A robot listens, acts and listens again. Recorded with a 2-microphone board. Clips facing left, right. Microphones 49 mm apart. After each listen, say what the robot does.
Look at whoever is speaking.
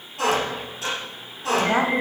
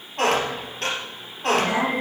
Turn 40° left.
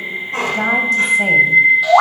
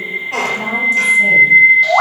Keep listening.
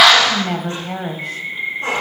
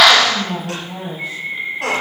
Turn 95° left.
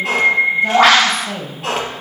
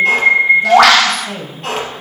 Found it: a woman speaking, straight ahead, 2 to 4 m away.